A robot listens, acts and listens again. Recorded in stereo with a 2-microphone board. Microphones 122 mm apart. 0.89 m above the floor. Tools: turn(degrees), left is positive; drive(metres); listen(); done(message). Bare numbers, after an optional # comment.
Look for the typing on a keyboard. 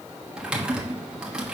turn(-30)
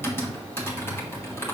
# So it is at 20° left.
turn(20)
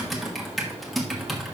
done("Found it: typing on a keyboard, straight ahead.")